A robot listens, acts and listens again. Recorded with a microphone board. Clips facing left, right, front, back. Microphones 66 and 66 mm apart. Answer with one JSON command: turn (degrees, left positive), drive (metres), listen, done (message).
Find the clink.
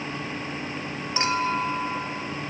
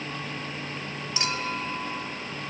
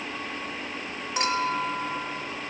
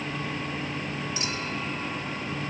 {"turn": 30}
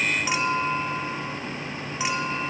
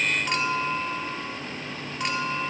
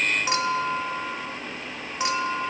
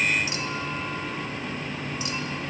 {"done": "Facing the clink."}